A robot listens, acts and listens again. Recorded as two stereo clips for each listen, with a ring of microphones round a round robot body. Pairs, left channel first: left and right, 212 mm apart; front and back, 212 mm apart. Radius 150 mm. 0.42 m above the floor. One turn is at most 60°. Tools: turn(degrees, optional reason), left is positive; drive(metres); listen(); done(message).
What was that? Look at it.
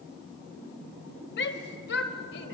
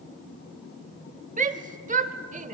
turn(degrees=60, reason="The shout: 130° left.")
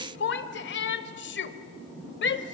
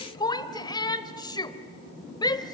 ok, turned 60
turn(degrees=60, reason="The shout is now 70° left.")
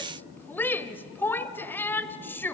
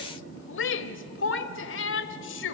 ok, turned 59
turn(degrees=10, reason="The shout is now 10° left.")
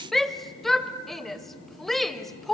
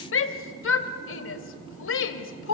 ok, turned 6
done("Facing the shout.")